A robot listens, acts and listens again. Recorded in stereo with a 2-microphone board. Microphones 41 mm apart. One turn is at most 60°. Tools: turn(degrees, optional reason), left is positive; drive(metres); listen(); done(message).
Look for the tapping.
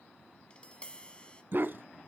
turn(degrees=25, reason="The tapping: about 25° left or 155° left.")
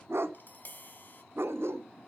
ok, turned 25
turn(degrees=60, reason="So it is at 130° left.")
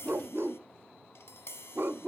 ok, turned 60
turn(degrees=60, reason="The tapping is now 95° left.")
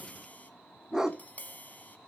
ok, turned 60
turn(degrees=45, reason="The tapping is now 45° left.")
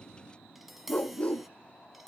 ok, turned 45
done("Facing the tapping.")